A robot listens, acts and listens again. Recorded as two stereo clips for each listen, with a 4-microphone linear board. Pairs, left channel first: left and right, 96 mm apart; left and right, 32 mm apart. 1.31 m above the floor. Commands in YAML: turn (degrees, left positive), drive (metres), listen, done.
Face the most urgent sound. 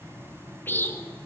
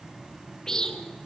listen: true
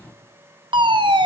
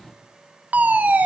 turn: -55
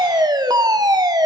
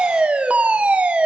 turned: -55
turn: -55
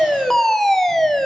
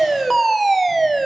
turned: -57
done: "Facing the fire alarm."